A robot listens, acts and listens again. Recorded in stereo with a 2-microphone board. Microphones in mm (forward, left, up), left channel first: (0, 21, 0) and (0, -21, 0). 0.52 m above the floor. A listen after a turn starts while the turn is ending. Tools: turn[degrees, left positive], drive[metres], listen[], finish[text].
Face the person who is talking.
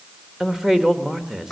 Action: turn[-30]
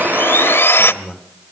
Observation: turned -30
Thought: So it is at 20° left.
Action: turn[20]
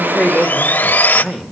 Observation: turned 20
Action: finish[Facing the man speaking.]